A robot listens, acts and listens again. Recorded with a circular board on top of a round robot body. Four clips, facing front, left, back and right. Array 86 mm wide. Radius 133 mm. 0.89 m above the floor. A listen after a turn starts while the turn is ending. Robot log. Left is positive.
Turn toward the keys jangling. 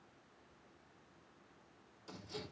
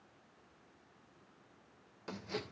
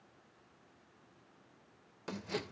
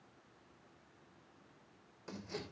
cmd idle
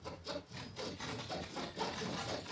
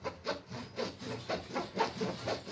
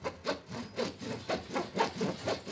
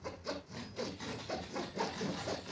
note: The keys jangling: 40° right.
cmd yaw -40
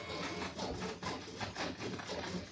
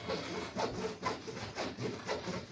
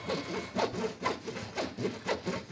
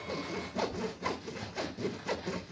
end: Found it: keys jangling, straight ahead, over 4 m away.